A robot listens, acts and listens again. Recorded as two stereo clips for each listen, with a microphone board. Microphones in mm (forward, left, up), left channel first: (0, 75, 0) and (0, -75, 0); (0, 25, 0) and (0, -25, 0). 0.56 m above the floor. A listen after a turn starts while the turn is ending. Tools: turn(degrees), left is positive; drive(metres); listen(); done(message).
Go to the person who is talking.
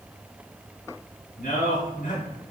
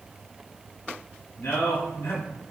turn(degrees=65)
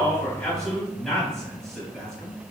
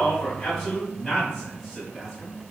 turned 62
drive(metres=1.0)
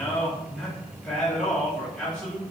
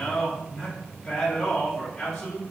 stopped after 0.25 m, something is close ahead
done("Blocked. The man speaking is further on, straight ahead.")